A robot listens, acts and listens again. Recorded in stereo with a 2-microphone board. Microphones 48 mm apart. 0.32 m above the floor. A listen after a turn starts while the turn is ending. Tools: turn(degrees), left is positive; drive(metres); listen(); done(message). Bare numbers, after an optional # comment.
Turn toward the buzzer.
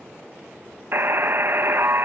# The buzzer: about 50° right or 130° right.
turn(-50)
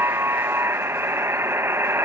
# So it is at 75° right.
turn(-75)
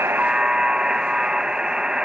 # The buzzer is now 20° right.
turn(-20)
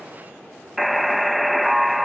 done("Facing the buzzer.")